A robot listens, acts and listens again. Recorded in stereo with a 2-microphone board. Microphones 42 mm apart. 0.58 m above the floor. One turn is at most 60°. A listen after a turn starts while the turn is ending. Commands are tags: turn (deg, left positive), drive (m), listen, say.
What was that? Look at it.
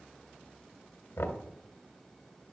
<turn deg="60"/>
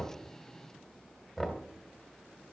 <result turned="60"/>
<say>Found it: knocking, straight ahead.</say>